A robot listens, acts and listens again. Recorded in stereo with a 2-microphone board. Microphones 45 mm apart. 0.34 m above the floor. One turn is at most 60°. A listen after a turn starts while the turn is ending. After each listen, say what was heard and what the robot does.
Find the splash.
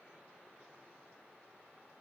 Keep listening.
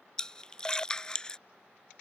The splash: about 20° left or 160° left. Turn 20° left.
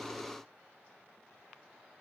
Keep listening.
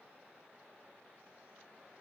I heard a splash, but can't make it out now. It was about straight ahead or 140° left.